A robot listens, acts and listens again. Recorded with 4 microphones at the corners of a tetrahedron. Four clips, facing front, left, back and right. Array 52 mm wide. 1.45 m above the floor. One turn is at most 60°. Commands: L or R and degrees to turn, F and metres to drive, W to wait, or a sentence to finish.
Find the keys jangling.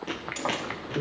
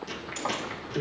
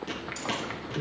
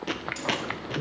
L15
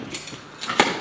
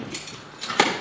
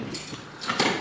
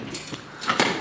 Found it: keys jangling, straight ahead, 1 to 2 m away.